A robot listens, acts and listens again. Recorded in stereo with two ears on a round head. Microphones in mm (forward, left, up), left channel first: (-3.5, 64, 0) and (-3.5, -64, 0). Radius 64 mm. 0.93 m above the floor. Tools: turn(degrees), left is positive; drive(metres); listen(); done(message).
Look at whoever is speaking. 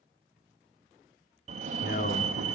turn(degrees=60)
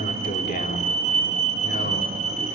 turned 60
turn(degrees=55)
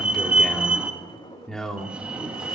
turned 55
done("Facing the man speaking, 2 to 4 m away.")